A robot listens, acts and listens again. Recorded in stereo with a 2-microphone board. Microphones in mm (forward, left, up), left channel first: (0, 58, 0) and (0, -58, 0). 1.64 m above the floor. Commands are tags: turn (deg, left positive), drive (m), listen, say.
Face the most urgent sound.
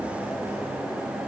<listen/>
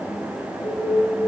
<turn deg="20"/>
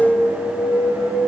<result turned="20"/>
<turn deg="145"/>
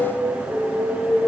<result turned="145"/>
<turn deg="-25"/>
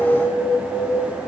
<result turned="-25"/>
<say>Found it: an alarm, straight ahead, over 4 m away.</say>